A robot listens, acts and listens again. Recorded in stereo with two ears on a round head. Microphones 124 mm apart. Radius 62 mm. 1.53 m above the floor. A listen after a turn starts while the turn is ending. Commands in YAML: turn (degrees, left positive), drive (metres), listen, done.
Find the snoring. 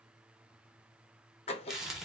listen: true
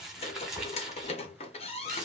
listen: true
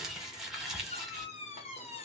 done: "I can't make out snoring, only a squeak and crumpling."